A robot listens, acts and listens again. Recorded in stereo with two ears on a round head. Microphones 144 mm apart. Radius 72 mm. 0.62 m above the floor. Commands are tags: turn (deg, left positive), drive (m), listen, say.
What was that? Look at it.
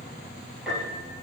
<turn deg="-30"/>
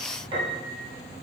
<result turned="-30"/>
<turn deg="-145"/>
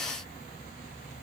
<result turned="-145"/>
<listen/>
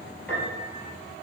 <turn deg="10"/>
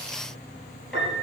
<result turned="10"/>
<say>Facing the piano.</say>